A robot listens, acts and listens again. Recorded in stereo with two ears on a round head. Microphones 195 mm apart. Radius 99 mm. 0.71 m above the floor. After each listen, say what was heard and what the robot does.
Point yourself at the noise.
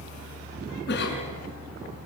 The cough: about 50° left or 130° left. Turn 50° left.
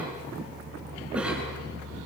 Facing the cough, over 4 m away.